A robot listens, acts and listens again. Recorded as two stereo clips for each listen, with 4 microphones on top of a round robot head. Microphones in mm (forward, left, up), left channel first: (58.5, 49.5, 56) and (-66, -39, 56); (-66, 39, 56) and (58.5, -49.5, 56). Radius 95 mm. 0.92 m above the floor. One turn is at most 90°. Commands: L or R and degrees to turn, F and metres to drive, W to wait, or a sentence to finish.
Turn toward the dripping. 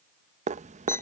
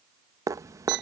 R90
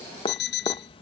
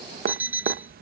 R15
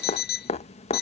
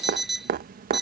R10
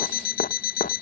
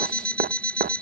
Found it: dripping, straight ahead.